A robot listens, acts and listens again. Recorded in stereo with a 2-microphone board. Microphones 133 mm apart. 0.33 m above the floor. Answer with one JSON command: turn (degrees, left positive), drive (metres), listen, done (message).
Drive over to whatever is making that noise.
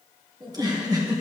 {"turn": -30}
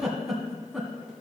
{"drive": 1.0}
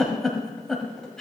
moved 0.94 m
{"drive": 1.0}
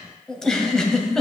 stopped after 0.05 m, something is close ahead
{"done": "I am next to the giggle."}